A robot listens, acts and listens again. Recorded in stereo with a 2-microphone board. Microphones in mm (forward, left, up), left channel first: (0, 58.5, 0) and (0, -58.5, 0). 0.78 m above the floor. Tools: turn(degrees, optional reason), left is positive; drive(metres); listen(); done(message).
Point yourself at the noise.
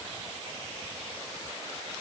listen()
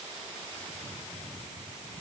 listen()
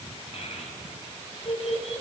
turn(degrees=60, reason="The child speaking: about 60° left or 120° left.")
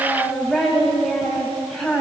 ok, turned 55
done("Found it: a child speaking, straight ahead.")